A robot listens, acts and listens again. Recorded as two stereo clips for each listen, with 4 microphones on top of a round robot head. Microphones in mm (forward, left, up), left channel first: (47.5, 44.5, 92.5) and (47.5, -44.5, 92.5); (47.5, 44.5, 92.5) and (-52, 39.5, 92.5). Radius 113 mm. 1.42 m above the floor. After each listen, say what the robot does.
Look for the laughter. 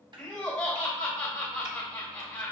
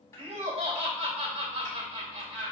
Turn 165° left.
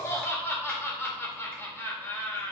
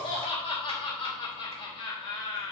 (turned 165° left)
Turn 30° left.
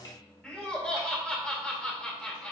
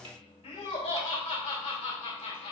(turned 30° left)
Turn 10° left.
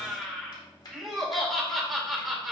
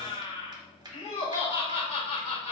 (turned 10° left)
Facing the laughter, 2 to 4 m away.